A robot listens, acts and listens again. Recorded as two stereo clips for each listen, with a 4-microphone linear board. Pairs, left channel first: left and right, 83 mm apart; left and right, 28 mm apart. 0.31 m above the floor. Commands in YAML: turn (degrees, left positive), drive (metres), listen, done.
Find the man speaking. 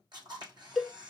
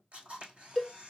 listen: true
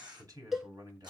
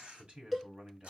turn: -55
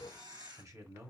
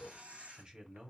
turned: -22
turn: -55
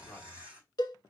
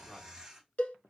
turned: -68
turn: 10
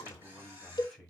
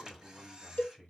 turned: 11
done: "Facing the man speaking."